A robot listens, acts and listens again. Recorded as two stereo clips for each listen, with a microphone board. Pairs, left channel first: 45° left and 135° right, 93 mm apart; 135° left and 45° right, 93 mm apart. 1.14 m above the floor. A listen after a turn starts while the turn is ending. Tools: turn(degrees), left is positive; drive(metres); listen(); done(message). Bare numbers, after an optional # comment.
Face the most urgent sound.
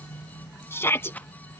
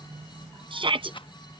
# The shout: 20° right.
turn(-20)
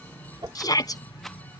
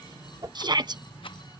done("Found it: a shout, straight ahead.")